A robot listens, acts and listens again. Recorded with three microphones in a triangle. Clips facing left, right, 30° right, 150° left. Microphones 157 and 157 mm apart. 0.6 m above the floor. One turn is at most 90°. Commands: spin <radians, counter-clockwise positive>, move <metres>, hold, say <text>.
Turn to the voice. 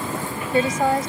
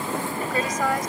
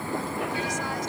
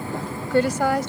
spin 1.57
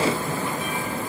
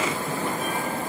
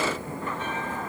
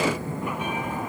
spin 1.05
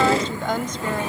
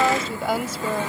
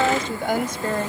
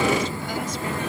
say Facing the woman speaking.